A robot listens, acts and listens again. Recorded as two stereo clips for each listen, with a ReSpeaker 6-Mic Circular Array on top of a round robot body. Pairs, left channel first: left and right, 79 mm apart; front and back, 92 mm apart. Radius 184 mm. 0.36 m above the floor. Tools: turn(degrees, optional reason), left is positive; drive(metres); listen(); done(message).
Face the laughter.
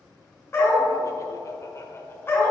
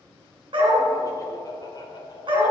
turn(degrees=35, reason="The laughter: 35° left.")
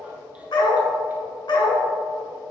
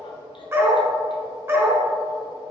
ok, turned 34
listen()
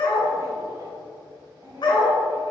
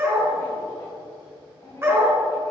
turn(degrees=-45, reason="The laughter is now 45° right.")
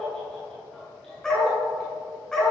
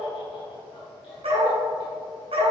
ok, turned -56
turn(degrees=10, reason="The laughter is now 10° left.")
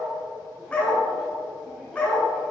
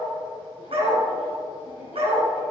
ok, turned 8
listen()
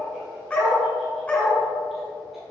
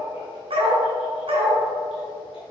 listen()
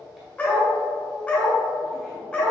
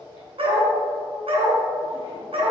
done("I heard laughter from this way, but can't make it out now.")